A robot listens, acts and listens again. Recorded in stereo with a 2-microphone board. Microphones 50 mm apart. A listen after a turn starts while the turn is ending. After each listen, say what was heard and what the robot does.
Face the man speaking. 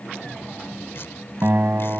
Keep listening.
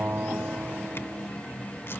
Keep listening.
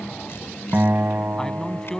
Turn 30° left.
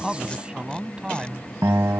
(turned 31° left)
So it is at 20° right. Turn 20° right.
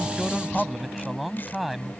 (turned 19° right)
Found it: a man speaking, straight ahead.